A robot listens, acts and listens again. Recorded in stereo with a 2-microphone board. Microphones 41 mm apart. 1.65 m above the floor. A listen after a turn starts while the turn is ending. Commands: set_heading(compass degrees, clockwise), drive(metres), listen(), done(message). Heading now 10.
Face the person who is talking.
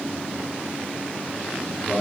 set_heading(335)
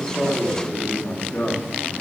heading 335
set_heading(215)
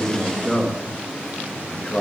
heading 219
set_heading(194)
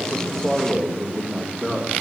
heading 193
done("Found it: a man speaking, straight ahead.")